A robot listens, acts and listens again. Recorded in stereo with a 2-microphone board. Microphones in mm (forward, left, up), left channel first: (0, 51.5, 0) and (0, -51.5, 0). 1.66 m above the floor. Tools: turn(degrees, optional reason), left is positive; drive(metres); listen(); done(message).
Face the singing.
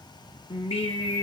turn(degrees=70, reason="The singing: about 70° left or 110° left.")
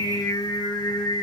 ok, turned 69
turn(degrees=40, reason="So it is at 40° left.")
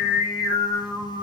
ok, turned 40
done("Facing the singing, 2 to 4 m away.")